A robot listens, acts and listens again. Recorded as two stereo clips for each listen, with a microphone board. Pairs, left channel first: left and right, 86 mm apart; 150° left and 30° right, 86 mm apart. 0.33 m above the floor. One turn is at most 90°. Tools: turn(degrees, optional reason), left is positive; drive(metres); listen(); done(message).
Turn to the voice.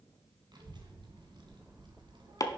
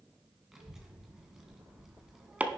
turn(degrees=-90, reason="The child speaking: 115° right.")
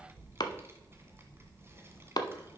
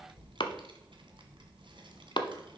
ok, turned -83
turn(degrees=-30, reason="The child speaking is now 30° right.")
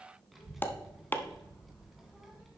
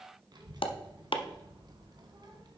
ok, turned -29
done("Found it: a child speaking, straight ahead.")